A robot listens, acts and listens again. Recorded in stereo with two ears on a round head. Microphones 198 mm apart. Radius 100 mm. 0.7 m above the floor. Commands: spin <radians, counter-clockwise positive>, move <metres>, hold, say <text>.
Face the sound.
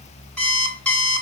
spin 0.52
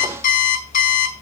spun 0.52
spin 2.44
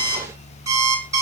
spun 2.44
spin -0.26
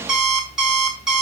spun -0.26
say Found it: an alarm clock, straight ahead.